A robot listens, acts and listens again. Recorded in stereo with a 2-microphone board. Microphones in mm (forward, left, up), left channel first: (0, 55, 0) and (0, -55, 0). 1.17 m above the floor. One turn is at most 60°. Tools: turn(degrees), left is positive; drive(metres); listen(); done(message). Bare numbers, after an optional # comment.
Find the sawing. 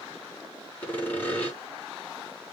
# The sawing: about 15° left or 165° left.
turn(15)
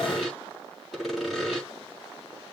done("Found it: sawing, straight ahead.")